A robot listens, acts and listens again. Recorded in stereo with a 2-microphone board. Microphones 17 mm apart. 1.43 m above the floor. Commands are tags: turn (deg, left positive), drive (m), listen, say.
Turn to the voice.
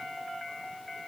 <listen/>
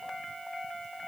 <listen/>
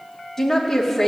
<turn deg="15"/>
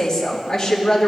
<turn deg="150"/>
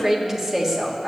<turn deg="-15"/>
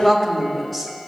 <say>Found it: a woman speaking, straight ahead.</say>